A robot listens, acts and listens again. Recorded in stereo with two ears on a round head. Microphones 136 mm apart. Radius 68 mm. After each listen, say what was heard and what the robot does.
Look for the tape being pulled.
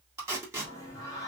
The tape being pulled: about 20° right or 160° right. Turn 20° right.
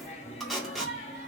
Found it: tape being pulled, straight ahead.